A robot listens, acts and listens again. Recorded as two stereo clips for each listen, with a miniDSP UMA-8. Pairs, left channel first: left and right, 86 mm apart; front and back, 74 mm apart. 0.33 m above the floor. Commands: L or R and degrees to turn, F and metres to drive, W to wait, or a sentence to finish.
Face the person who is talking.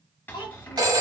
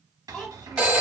L90
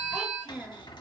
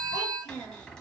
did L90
L15
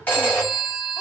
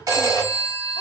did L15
W
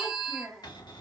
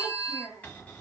Facing the child speaking, 1 to 2 m away.